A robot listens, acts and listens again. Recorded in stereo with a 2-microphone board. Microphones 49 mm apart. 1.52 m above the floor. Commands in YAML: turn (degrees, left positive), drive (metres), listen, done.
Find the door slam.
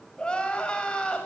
listen: true
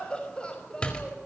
turn: 20
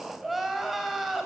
listen: true
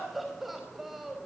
done: "I heard a door slam, but can't make it out now. It was about straight ahead or 140° left."